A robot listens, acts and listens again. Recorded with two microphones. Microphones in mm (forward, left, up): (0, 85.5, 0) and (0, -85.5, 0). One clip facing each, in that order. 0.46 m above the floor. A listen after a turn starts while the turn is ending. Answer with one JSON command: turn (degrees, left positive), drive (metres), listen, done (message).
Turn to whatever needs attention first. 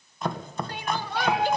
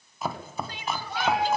{"turn": 55}
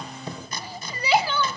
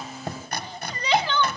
{"turn": 10}
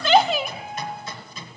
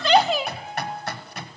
{"done": "Facing the crying."}